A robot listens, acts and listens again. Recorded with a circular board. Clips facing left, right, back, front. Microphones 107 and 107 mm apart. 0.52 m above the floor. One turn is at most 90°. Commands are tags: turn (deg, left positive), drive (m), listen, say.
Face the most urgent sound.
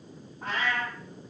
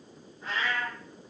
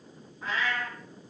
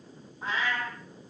<listen/>
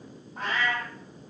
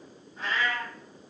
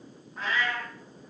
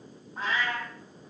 <listen/>
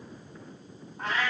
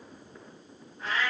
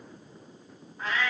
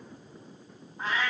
<say>I can't make out anything urgent to turn to.</say>